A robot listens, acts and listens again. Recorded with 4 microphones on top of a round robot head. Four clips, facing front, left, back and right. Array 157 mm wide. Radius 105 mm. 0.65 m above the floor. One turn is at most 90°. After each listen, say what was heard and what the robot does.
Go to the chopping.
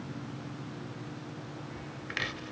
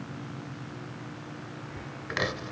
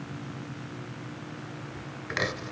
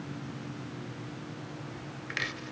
The chopping: 130° left. Turn 90° left.
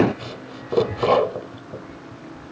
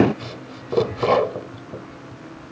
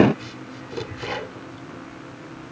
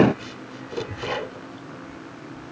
The chopping is now 40° left. Turn 40° left.
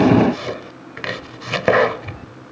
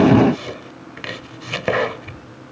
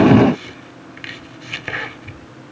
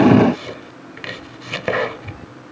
Drive 1.0 m forward.
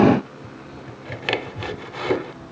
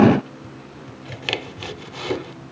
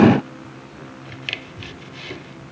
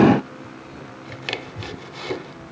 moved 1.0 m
The chopping is now 15° left. Turn 15° left.
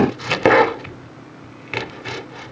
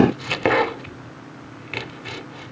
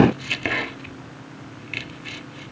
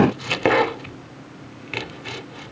Drive 1.0 m forward.
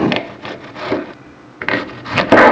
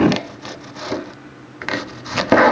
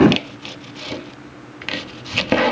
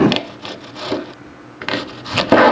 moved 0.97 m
The chopping is now 15° right. Turn 15° right.
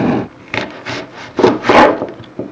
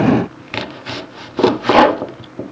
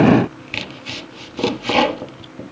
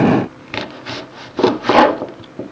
Drive 1.0 m forward.
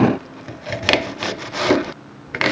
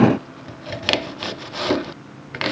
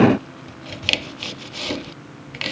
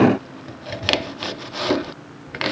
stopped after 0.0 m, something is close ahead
I am next to the chopping.